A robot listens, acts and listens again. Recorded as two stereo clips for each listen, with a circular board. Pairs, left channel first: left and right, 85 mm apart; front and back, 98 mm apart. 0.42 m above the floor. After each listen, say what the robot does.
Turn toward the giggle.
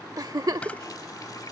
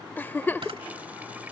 Turn 65° right.
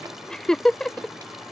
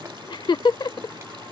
Turn 10° left.
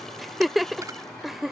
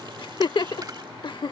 Facing the giggle.